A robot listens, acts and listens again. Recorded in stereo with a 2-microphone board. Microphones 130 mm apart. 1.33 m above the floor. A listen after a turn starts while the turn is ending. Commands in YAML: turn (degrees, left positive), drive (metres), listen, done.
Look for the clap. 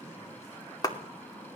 turn: 30
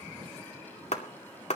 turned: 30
turn: 120
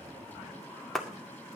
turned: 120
done: "Found it: a clap, straight ahead, 2 to 4 m away."